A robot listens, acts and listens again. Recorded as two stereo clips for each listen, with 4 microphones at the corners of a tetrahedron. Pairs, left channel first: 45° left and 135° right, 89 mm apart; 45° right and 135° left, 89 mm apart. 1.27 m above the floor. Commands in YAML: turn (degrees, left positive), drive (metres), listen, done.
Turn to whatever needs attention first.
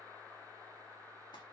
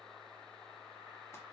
listen: true
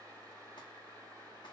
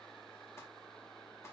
listen: true
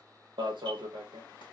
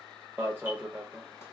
turn: -155
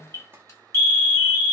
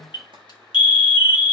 turn: -15
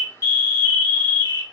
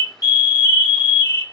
done: "Found it: an alarm, straight ahead, under 1 m away."